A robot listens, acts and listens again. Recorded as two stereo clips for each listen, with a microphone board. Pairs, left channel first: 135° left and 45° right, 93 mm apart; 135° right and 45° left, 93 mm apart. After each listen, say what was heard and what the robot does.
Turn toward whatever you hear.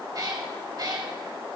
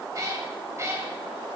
The cat meowing: 10° right. Turn 10° right.
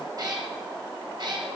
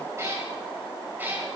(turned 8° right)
The cat meowing is now 20° right. Turn 20° right.
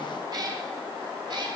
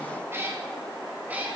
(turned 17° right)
The cat meowing is now 25° right. Turn 25° right.
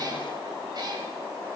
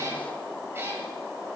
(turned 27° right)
Keep listening.
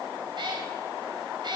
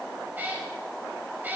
The cat meowing is now 25° right. Turn 25° right.
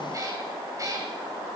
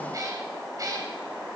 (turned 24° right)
Found it: a cat meowing, straight ahead.